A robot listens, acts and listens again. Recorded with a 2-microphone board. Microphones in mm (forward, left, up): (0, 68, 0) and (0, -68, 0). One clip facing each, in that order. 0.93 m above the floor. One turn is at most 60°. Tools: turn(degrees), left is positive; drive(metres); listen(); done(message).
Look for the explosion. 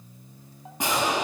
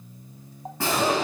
turn(degrees=15)
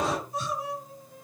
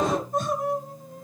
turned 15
done("Facing the explosion.")